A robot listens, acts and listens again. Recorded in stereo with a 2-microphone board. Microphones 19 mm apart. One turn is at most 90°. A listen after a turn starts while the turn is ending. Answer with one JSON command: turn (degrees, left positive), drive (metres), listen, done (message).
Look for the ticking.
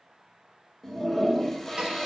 {"listen": true}
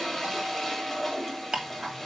{"turn": -50}
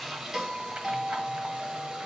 {"listen": true}
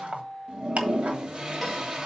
{"turn": -80}
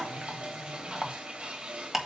{"turn": -10}
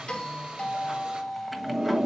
{"listen": true}
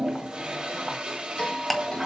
{"done": "Facing the ticking, 1 to 2 m away."}